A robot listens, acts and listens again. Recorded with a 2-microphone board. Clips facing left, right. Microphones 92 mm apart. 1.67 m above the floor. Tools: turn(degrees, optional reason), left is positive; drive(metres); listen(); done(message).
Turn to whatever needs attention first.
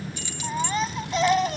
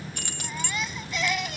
turn(degrees=35, reason="The baby crying: about 35° left or 145° left.")
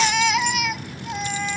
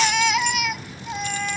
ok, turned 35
done("Found it: a baby crying, straight ahead.")